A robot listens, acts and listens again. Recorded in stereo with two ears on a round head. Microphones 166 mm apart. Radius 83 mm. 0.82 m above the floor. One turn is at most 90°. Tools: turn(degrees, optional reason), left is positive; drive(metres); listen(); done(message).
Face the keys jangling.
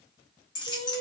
turn(degrees=25, reason="The keys jangling: about 25° left or 155° left.")
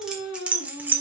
turn(degrees=-10, reason="So it is at 10° right.")
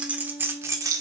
turn(degrees=-20, reason="The keys jangling is now 20° right.")
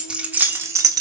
turn(degrees=-20, reason="The keys jangling is now 20° right.")
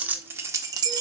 turn(degrees=-25, reason="The keys jangling is now 25° right.")
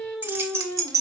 turn(degrees=-20, reason="The keys jangling is now 20° right.")
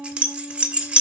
done("Found it: keys jangling, straight ahead, 1 to 2 m away.")